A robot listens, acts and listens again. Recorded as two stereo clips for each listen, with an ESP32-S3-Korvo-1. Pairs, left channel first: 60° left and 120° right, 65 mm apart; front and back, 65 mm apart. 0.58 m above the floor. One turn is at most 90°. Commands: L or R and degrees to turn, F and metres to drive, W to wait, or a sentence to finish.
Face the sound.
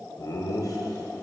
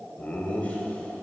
L65
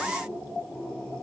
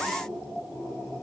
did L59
L10
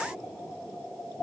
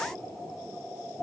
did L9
W
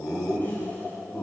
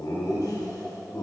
Found it: laughter, straight ahead.